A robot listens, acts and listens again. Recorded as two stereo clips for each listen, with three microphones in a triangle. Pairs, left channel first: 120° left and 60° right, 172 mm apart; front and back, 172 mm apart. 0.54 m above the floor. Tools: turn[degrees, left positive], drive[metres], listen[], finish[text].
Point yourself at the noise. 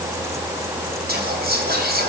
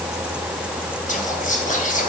Thought: The whispering: 40° right.
Action: turn[-40]
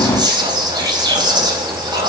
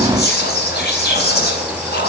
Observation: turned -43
Action: finish[Found it: whispering, straight ahead, 2 to 4 m away.]